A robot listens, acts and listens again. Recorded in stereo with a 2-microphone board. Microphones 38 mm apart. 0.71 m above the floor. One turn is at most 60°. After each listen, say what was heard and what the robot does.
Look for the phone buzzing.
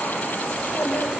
Keep listening.
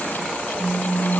The phone buzzing: about 70° right or 110° right. Turn 60° right.
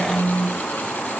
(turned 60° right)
So it is at 25° right. Turn 25° right.
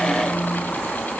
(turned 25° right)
Keep listening.
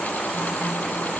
Keep listening.
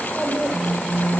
Found it: a phone buzzing, straight ahead.